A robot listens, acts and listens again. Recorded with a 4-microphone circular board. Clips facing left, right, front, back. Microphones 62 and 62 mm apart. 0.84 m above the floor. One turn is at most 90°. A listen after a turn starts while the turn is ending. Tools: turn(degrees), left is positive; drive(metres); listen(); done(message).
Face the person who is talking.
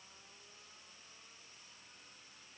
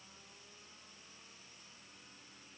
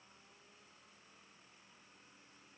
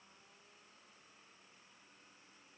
listen()
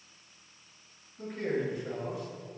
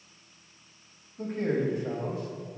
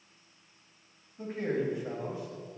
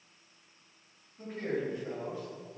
turn(degrees=-70)
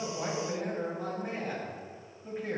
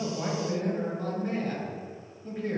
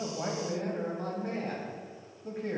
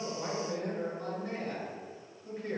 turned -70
done("Found it: a man speaking, straight ahead, 1 to 2 m away.")